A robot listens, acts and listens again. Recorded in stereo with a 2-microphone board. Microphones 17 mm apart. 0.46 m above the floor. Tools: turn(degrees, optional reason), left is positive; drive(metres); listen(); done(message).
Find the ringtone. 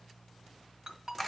turn(degrees=-45, reason="The ringtone: about 45° right or 135° right.")
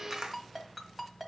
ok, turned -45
done("Facing the ringtone, 1 to 2 m away.")